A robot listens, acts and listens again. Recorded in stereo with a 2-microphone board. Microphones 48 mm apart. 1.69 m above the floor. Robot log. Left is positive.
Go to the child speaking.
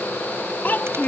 note: The child speaking: about 40° left or 140° left.
cmd yaw +40
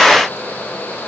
cmd idle
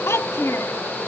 note: So it is at 100° left.
cmd yaw +100
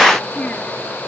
cmd idle
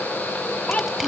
note: The child speaking is now 35° left.
cmd yaw +35
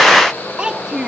note: The child speaking is now 20° right.
cmd yaw -20
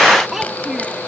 cmd fwd 1.0
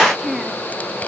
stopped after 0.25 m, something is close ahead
note: The child speaking is now 10° right.
cmd yaw -10
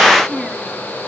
end: Blocked. The child speaking is further on, straight ahead.